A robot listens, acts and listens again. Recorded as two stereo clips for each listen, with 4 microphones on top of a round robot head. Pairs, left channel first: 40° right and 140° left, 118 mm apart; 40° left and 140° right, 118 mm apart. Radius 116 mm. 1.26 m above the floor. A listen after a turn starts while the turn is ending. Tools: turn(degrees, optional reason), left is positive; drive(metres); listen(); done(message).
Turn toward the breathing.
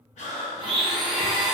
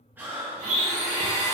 turn(degrees=-65, reason="The breathing: 65° right.")
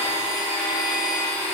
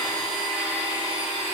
listen()
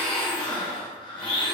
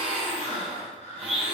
turn(degrees=10, reason="The breathing is now 10° left.")
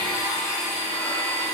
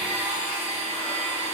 listen()
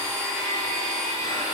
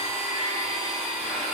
listen()
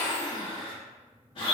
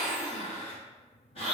done("Found it: breathing, straight ahead.")